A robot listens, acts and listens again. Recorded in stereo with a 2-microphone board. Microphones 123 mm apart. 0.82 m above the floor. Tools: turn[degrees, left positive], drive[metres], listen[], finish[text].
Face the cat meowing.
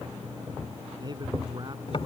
Action: listen[]
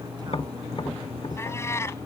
Thought: The cat meowing: about 20° left or 160° left.
Action: turn[20]
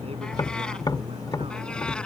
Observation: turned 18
Action: listen[]
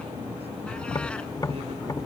Action: listen[]
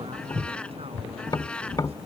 Action: turn[30]
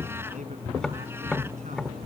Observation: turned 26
Action: listen[]
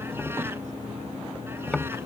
Action: listen[]
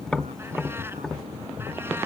Action: finish[I heard a cat meowing, but can't make it out now. It was about 20° right or 145° left.]